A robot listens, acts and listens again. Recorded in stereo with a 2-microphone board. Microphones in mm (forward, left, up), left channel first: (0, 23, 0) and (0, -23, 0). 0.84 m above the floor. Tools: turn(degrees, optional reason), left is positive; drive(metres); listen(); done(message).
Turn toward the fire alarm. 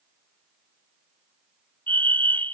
turn(degrees=45, reason="The fire alarm: about 45° left or 135° left.")
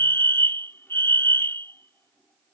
turn(degrees=80, reason="So it is at 80° left.")
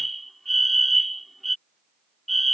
done("Facing the fire alarm.")